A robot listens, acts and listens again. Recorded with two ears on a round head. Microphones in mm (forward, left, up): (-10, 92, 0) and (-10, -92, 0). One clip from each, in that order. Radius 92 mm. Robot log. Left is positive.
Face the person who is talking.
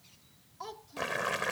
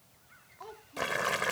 note: The child speaking: about 60° left or 120° left.
cmd yaw +60
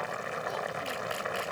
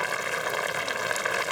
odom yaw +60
cmd idle
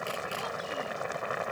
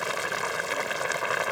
cmd idle
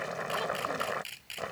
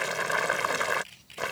end: I heard a child speaking, but can't make it out now. It was about straight ahead or 60° left.